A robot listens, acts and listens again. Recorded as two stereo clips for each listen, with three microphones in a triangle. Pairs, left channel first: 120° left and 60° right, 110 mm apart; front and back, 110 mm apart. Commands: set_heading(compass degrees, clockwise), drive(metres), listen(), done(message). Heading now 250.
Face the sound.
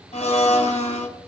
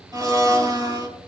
set_heading(125)
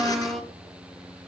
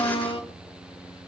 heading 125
set_heading(95)
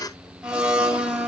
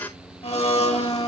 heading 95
set_heading(75)
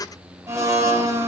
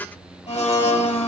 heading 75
done("Facing the blender, 2 to 4 m away.")